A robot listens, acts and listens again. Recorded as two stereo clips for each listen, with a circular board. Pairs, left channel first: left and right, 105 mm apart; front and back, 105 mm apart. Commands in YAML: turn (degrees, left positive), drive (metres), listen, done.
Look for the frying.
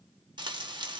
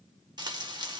turn: -135
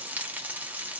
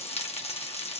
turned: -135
turn: -15
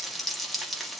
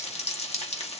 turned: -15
done: "Found it: frying, straight ahead, 1 to 2 m away."